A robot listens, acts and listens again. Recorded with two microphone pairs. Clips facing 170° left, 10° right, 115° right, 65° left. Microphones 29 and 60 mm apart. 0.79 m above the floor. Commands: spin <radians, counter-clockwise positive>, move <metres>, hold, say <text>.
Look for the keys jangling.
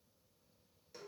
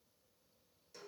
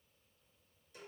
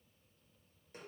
hold
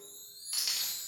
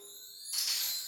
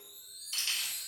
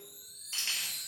spin 2.09
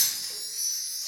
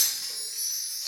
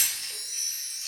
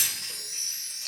spin 0.44
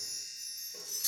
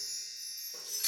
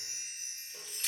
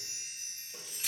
spin -0.35
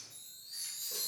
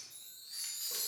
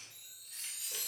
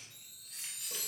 hold
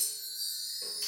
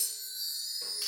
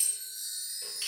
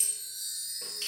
spin -0.44
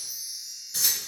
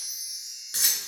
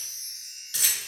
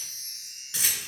say Facing the keys jangling, 1 to 2 m away.